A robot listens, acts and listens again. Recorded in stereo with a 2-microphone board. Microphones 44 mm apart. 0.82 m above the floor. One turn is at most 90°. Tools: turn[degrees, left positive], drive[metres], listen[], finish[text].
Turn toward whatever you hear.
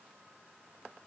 Action: listen[]
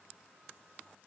Action: listen[]
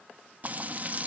Thought: The frying: about 35° right or 145° right.
Action: turn[-35]
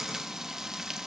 Thought: So it is at 10° right.
Action: turn[-10]
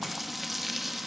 Action: finish[Found it: frying, straight ahead, 1 to 2 m away.]